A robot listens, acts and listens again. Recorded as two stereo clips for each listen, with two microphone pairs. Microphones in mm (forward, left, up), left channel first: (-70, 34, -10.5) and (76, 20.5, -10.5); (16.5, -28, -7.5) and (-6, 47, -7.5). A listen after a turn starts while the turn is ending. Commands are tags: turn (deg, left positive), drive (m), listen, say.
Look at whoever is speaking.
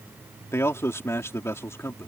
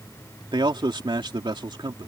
<turn deg="105"/>
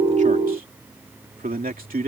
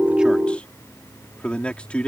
<say>Found it: a man speaking, straight ahead.</say>